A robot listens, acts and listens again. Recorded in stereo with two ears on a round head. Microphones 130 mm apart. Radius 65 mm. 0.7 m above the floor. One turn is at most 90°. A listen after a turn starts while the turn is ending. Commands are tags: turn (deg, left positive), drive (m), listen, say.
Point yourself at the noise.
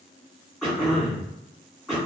<turn deg="30"/>
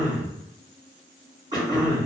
<turn deg="-30"/>
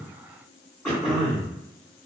<say>Found it: throat clearing, straight ahead.</say>